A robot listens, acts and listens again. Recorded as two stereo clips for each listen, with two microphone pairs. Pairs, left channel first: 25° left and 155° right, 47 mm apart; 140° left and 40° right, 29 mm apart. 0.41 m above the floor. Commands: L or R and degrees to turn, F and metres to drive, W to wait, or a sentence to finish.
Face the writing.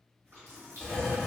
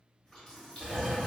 R50
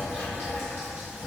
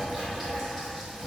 R25
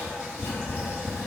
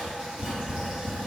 L20
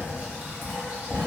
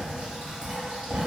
Found it: writing, straight ahead.